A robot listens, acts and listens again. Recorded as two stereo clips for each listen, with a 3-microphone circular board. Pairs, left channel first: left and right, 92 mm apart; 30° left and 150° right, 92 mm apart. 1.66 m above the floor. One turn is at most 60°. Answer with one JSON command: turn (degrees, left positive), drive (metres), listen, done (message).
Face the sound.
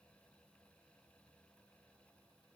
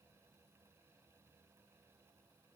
{"listen": true}
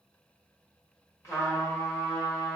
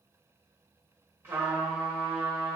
{"turn": 60}
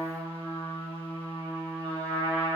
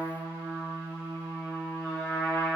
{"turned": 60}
{"turn": 60}
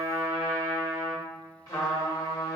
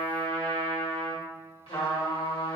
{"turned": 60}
{"turn": 40}
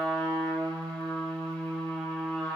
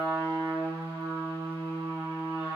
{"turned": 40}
{"turn": 10}
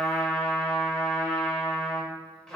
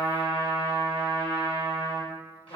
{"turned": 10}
{"done": "Found it: a trumpet, straight ahead, 1 to 2 m away."}